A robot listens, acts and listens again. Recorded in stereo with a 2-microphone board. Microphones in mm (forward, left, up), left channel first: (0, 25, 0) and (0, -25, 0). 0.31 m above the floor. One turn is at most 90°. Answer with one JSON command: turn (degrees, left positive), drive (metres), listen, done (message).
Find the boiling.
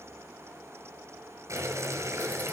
{"turn": -90}
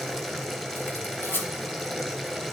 {"done": "Facing the boiling, 1 to 2 m away."}